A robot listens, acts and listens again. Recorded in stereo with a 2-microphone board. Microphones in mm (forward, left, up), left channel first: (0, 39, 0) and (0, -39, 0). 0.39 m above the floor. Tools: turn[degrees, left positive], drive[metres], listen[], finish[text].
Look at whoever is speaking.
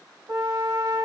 Action: listen[]
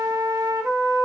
Action: listen[]
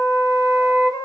Action: finish[I can't make out anyone speaking, only a flute.]